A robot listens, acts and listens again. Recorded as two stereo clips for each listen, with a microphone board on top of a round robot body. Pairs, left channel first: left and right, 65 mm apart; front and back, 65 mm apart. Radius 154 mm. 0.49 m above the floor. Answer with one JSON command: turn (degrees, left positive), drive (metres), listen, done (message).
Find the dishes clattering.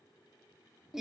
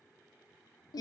{"listen": true}
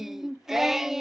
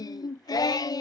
{"listen": true}
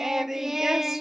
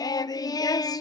{"done": "I can't make out dishes clattering, only singing."}